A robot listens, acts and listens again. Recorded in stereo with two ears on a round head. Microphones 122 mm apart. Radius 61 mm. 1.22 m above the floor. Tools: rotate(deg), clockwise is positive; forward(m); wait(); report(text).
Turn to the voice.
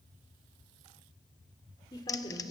rotate(-30)
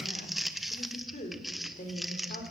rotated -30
rotate(-120)
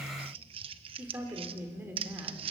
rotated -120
rotate(15)
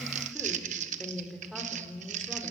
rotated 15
report("Facing the woman speaking.")